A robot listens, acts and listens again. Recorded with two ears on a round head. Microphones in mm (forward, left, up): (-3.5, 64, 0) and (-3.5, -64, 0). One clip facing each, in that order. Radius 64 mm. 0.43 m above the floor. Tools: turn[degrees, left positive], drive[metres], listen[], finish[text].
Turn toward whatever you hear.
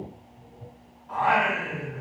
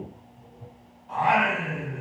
Thought: The singing: about 35° right or 145° right.
Action: turn[-35]
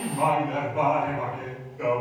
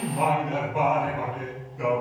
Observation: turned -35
Thought: So it is at 105° right.
Action: turn[-105]
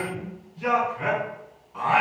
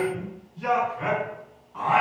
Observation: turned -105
Thought: The singing is now 20° left.
Action: turn[20]
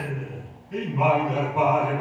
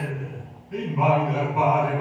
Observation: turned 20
Action: finish[Found it: singing, straight ahead.]